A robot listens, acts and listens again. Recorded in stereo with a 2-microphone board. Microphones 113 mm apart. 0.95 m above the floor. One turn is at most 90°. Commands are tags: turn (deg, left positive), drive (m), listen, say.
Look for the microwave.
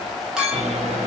<turn deg="-90"/>
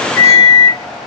<say>Found it: a microwave, straight ahead, under 1 m away.</say>